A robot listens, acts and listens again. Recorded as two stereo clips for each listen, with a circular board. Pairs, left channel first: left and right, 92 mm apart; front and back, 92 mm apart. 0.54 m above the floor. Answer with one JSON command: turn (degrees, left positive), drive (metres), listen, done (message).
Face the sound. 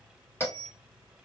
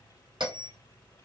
{"turn": 155}
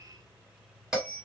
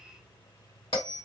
{"done": "Facing the bell, 1 to 2 m away."}